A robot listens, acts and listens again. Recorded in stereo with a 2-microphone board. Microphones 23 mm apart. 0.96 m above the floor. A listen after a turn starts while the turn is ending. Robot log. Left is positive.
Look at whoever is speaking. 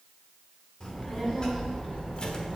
note: The child speaking: about 40° left or 140° left.
cmd yaw +40
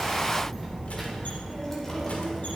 note: So it is at 15° left.
cmd yaw +15
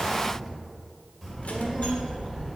end: Facing the child speaking.